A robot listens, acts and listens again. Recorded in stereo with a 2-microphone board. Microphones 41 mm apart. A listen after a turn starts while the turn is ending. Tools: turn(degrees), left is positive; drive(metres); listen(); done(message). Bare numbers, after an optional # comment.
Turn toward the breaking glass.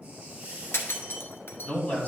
# The breaking glass: about 75° left or 105° left.
turn(75)
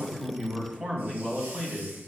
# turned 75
listen()
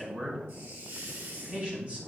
done("I heard breaking glass, but can't make it out now. It was about straight ahead or 30° left.")